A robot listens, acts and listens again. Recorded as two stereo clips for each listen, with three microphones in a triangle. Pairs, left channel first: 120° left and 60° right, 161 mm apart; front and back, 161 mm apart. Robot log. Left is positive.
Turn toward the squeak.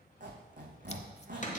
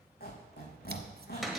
note: The squeak: 20° right.
cmd yaw -20
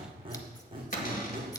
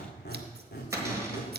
end: Facing the squeak, 2 to 4 m away.